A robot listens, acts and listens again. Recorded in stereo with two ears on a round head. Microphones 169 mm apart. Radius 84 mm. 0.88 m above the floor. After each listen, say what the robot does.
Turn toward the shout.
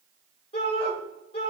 Turn 30° left.
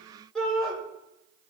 Facing the shout, 2 to 4 m away.